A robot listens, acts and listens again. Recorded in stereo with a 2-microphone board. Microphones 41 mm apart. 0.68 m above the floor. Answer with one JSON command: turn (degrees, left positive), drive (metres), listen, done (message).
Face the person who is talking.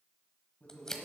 {"turn": 45}
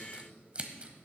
{"listen": true}
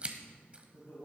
{"turn": 90}
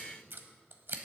{"listen": true}
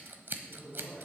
{"done": "Found it: a man speaking, straight ahead."}